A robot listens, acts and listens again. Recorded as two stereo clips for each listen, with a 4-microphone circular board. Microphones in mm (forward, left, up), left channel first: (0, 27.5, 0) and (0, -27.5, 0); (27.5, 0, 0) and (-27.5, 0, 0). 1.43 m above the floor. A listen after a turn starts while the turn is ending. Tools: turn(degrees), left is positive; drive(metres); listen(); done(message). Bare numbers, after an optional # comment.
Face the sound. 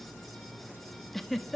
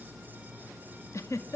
done("Found it: a giggle, straight ahead.")